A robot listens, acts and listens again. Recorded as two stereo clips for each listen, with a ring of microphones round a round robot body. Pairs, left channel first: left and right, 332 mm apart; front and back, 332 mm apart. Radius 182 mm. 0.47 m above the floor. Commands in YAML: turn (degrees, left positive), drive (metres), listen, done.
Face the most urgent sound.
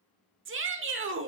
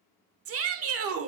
turn: -140
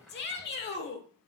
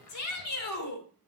turn: 35
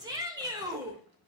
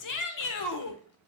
turn: -15
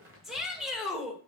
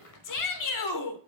done: "Found it: a shout, straight ahead."